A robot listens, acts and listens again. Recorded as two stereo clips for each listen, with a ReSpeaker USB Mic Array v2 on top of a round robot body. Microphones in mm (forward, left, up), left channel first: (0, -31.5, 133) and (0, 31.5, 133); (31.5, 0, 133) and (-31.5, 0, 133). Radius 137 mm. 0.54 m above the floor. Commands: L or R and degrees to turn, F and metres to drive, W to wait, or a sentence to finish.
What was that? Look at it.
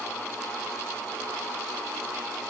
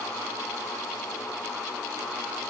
W
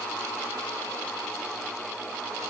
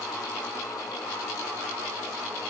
W
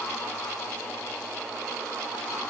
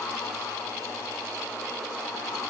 I can't make out anything.